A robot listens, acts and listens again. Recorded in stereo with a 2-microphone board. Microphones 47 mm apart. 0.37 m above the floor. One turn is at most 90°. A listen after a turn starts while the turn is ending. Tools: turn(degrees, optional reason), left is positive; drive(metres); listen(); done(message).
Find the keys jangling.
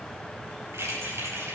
turn(degrees=-75, reason="The keys jangling: about 75° right or 105° right.")
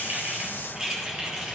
turn(degrees=-25, reason="So it is at 25° right.")
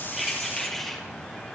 done("Facing the keys jangling, over 4 m away.")